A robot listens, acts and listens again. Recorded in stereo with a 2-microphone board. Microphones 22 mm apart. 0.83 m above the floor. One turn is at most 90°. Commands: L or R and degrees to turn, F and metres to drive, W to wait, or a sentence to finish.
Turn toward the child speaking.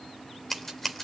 W
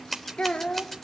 L55
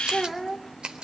Found it: a child speaking, straight ahead, 2 to 4 m away.